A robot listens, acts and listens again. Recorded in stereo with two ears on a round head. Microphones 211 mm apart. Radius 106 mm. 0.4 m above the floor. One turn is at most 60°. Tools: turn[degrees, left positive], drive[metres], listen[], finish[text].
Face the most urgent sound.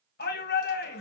Thought: The shout: about 40° left or 140° left.
Action: turn[40]
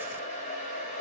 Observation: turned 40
Action: listen[]
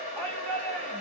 Action: finish[Facing the shout.]